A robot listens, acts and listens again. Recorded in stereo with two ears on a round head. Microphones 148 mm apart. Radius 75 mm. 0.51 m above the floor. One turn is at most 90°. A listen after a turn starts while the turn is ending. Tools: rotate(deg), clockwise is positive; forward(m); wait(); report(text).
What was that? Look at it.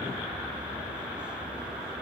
wait()
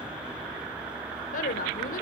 rotate(-55)
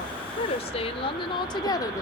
rotate(-20)
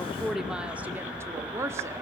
rotate(15)
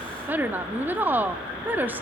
rotate(10)
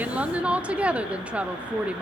rotate(10)
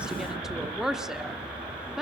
report("Found it: a woman speaking, straight ahead, 1 to 2 m away.")